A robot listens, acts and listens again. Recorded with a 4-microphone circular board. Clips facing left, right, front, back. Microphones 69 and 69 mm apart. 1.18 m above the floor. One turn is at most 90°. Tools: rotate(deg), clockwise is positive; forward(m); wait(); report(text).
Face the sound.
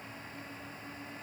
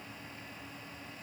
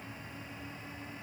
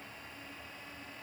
wait()
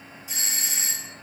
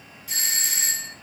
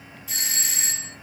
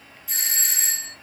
rotate(85)
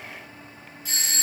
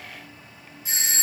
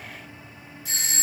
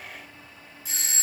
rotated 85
rotate(20)
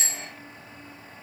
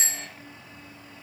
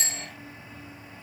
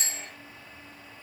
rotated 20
report("Facing the doorbell, 2 to 4 m away.")